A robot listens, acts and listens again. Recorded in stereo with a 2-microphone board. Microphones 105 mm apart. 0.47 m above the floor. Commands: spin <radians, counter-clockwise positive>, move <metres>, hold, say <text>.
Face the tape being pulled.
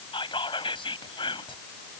hold
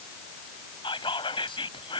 hold
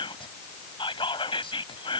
say I can't make out tape being pulled to turn to.